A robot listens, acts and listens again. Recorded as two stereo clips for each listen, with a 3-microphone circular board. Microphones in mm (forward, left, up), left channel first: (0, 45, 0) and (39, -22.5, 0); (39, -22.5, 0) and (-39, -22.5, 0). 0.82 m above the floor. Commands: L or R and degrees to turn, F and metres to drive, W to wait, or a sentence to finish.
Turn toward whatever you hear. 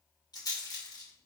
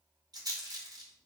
L150
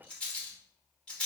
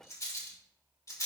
L45
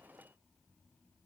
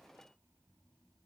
W
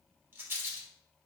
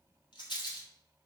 Facing the rattle, 2 to 4 m away.